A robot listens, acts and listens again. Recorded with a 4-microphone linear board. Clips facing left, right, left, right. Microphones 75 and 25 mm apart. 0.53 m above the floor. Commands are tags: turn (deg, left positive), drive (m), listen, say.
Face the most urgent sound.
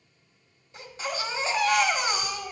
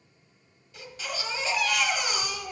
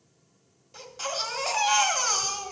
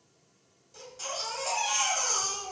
<turn deg="30"/>
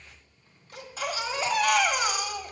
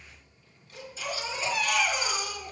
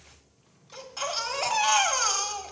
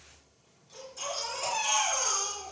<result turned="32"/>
<turn deg="115"/>
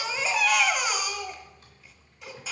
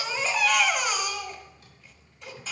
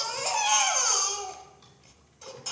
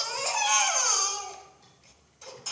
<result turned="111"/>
<say>Facing the baby crying, 1 to 2 m away.</say>